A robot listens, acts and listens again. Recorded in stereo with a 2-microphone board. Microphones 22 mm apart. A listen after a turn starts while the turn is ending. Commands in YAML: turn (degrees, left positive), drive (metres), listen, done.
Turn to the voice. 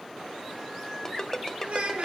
turn: -65
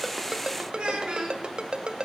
turn: -50
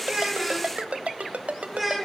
done: "Facing the child speaking."